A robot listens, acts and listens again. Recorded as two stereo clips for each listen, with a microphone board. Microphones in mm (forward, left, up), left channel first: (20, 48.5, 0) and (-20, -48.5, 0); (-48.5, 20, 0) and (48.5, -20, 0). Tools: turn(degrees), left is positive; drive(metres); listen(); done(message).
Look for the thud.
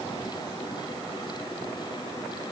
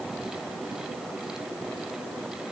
listen()
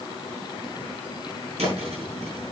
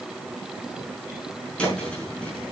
turn(degrees=-125)
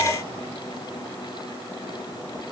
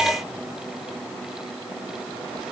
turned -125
done("Facing where the thud came from. I can't hear it now.")